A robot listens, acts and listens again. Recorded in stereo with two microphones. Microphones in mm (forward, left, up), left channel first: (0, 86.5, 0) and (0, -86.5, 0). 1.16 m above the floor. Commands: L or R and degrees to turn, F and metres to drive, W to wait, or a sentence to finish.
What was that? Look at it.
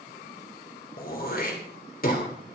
L55
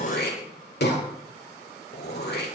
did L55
L70
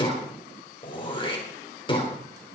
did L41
L30
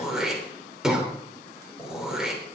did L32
Facing the throat clearing, 2 to 4 m away.